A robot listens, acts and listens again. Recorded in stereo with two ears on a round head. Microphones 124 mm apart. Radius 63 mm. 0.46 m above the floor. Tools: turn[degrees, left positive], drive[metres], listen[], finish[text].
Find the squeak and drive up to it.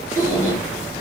Thought: The squeak: about 30° right or 150° right.
Action: turn[-30]
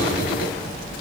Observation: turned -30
Action: listen[]
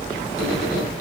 Thought: So it is at 120° right.
Action: turn[-120]
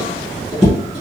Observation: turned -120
Action: drive[1.0]
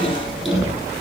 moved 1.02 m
Action: drive[1.0]
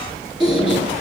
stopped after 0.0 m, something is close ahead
Action: finish[I am next to the squeak.]